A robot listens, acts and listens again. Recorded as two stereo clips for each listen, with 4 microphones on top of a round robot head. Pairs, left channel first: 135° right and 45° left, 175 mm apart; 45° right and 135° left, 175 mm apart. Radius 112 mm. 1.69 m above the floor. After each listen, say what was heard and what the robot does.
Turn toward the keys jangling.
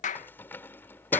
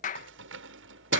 The keys jangling: 145° left. Turn 145° left.
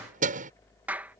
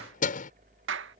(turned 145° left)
Found it: keys jangling, straight ahead.